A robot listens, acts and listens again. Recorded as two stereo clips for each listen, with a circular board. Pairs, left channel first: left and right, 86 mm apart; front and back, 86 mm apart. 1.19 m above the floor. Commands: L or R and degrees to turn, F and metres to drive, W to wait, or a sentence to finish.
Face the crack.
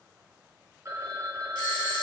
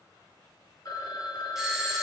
W
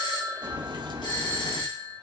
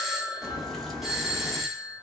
R90
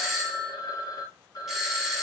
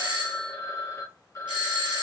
Facing where the crack came from. I can't hear it now.